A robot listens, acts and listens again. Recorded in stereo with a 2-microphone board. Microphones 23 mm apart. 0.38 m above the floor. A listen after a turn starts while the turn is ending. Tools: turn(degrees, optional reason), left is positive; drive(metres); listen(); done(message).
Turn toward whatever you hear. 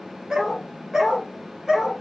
turn(degrees=-30, reason="The dog barking: about 30° right or 150° right.")
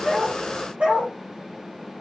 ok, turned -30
turn(degrees=-120, reason="So it is at 120° right.")
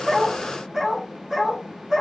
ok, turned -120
turn(degrees=-10, reason="The dog barking is now 10° right.")
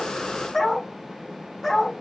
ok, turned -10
done("Found it: a dog barking, straight ahead.")